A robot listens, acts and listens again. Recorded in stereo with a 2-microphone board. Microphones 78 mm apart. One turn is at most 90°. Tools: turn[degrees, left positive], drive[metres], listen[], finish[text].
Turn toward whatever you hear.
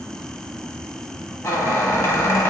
Thought: The squeak: about 40° left or 140° left.
Action: turn[40]
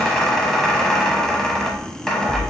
Thought: So it is at 10° left.
Action: turn[10]
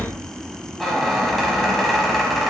Action: finish[Facing the squeak, 1 to 2 m away.]